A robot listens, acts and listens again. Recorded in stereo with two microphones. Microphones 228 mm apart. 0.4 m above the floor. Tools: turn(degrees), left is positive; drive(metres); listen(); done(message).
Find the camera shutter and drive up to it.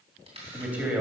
turn(degrees=-25)
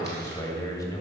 listen()
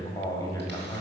listen()
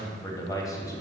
done("I heard a camera shutter, but can't make it out now. It was about straight ahead or 130° right. I did not reach it.")